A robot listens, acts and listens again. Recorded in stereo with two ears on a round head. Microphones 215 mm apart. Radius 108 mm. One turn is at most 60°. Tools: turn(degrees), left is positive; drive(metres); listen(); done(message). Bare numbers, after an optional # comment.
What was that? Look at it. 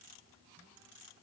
listen()
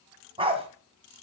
# The dog barking: about 25° right or 155° right.
turn(-25)
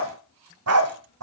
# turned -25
# So it is at 110° right.
turn(-60)
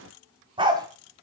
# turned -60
# The dog barking is now 20° right.
turn(-20)
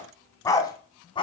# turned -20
# The dog barking is now 20° left.
turn(20)
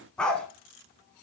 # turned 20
done("Facing the dog barking, 2 to 4 m away.")